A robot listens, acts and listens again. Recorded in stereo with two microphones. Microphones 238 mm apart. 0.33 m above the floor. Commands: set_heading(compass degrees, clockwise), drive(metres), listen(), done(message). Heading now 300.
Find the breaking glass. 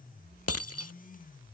set_heading(210)
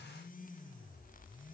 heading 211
done("Facing where the breaking glass came from. I can't hear it now.")